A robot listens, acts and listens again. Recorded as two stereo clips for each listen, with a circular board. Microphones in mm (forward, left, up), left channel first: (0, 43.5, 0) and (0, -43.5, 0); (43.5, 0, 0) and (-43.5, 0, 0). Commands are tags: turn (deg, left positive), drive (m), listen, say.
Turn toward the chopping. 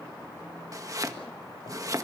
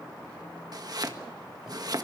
<turn deg="-140"/>
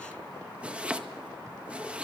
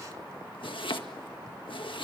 <turn deg="-15"/>
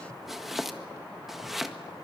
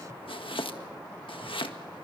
<say>Found it: chopping, straight ahead, 1 to 2 m away.</say>